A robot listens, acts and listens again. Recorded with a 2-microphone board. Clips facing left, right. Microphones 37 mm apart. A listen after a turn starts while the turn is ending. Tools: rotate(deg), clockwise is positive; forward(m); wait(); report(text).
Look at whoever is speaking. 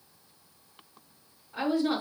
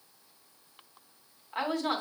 rotate(65)
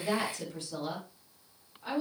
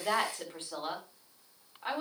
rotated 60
rotate(45)
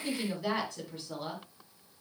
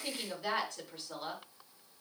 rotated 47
report("Facing the woman speaking.")